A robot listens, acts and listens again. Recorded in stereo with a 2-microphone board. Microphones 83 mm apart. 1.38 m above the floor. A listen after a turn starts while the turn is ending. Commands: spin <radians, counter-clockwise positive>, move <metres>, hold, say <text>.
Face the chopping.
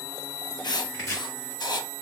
spin 0.70
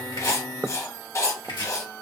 spin 1.66
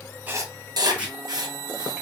spin -0.26
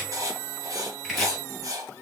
say Found it: chopping, straight ahead.